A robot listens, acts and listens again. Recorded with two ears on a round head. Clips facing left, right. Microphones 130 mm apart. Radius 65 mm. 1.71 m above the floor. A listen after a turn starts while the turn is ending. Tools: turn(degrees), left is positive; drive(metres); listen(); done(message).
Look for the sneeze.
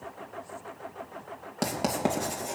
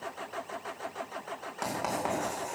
listen()
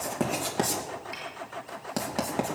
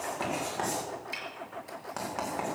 listen()
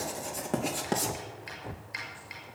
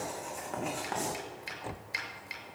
done("I can't make out a sneeze to turn to.")